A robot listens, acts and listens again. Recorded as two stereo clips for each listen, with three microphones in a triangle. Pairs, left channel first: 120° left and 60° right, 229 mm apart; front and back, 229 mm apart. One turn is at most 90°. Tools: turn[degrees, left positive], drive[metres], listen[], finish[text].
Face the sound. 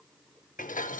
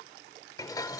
Thought: The dishes clattering: 70° left.
Action: turn[70]
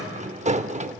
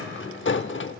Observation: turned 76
Action: finish[Found it: dishes clattering, straight ahead, under 1 m away.]